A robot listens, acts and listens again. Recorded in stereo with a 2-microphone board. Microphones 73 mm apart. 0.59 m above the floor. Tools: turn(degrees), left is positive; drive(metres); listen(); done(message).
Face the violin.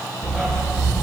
listen()
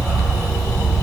listen()
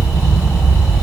done("I can't make out a violin, only a dog barking.")